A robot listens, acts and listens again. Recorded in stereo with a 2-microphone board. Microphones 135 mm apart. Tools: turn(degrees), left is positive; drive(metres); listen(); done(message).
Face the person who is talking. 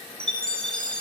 listen()
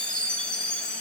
listen()
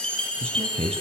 turn(degrees=-50)
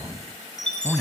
done("Facing the man speaking.")